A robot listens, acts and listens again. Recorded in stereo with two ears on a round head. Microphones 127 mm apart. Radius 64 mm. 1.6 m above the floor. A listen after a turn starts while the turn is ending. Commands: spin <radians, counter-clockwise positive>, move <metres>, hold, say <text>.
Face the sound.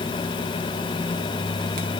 hold
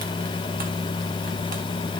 hold
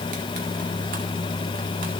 say I can't make out anything to turn to.